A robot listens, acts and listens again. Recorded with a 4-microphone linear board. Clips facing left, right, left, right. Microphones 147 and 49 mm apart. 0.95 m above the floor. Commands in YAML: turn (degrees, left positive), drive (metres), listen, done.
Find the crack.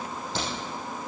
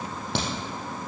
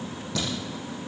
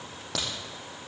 turn: -65
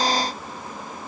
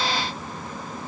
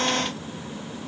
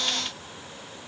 listen: true
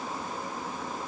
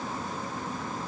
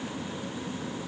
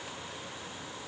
done: "I heard a crack, but can't make it out now. It was about straight ahead or 50° right."